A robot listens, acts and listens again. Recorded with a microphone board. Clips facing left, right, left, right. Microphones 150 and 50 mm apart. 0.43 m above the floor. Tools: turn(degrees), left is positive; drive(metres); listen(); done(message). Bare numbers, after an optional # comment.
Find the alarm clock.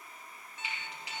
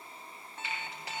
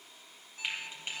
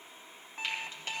# The alarm clock: about 55° right or 125° right.
turn(-55)
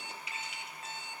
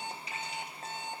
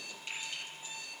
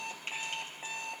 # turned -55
# So it is at 60° right.
turn(-60)
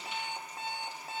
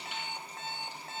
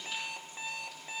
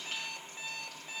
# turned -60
# The alarm clock is now 15° left.
turn(15)
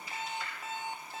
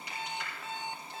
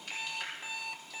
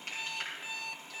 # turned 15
done("Facing the alarm clock.")